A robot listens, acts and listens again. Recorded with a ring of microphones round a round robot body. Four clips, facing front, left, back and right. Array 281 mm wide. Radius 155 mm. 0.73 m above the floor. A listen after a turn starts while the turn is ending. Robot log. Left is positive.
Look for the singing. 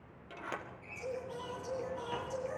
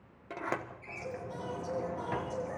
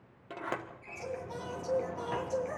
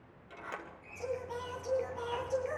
note: The singing: 105° right.
cmd yaw -105
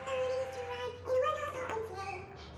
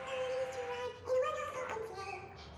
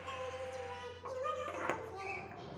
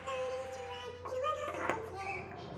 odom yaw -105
note: The singing is now 10° left.
cmd yaw +10
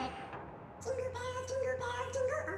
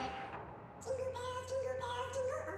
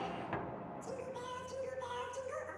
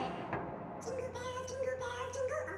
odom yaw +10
note: The singing is now 10° right.
cmd yaw -10
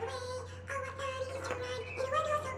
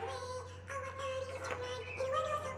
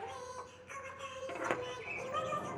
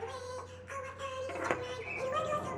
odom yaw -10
end: Found it: singing, straight ahead.